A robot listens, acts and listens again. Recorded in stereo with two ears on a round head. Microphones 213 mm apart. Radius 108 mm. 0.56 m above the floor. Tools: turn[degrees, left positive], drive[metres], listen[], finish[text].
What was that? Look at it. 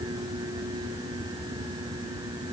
Action: listen[]
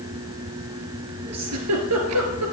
Action: turn[-90]
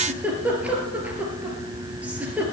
Action: finish[Found it: a giggle, straight ahead.]